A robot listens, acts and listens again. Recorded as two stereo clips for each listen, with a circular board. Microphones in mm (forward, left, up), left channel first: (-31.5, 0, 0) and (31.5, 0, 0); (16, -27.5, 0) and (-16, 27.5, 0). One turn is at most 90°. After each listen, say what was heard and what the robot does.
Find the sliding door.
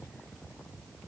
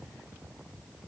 Keep listening.
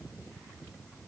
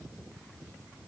Keep listening.
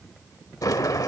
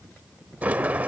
The sliding door: 175° right. Turn 90° right.
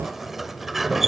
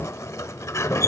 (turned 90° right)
The sliding door is now 85° right. Turn 85° right.
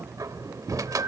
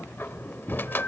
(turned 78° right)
Facing the sliding door.